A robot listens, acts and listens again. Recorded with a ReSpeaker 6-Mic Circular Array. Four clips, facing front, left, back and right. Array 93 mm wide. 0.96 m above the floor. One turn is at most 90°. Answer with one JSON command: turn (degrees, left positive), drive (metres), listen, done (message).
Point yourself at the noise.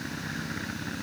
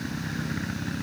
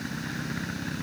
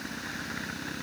{"listen": true}
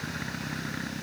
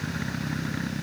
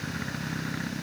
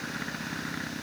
{"listen": true}
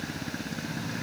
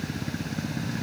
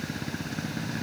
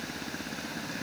{"done": "I can't make out anything to turn to."}